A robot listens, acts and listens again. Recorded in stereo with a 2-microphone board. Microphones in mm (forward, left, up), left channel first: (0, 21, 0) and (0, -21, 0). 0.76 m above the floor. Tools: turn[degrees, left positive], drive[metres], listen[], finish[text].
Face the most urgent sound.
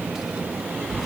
Action: listen[]
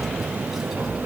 Action: listen[]
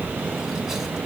Action: finish[I can't make out anything urgent, only tapping.]